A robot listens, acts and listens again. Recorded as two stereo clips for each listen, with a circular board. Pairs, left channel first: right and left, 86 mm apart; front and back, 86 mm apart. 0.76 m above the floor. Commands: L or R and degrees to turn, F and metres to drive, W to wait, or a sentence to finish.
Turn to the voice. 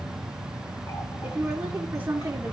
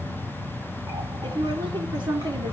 L155
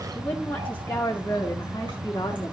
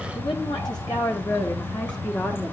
R45
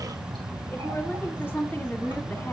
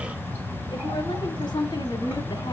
R15
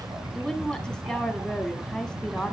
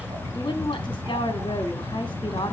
Facing the woman speaking, 1 to 2 m away.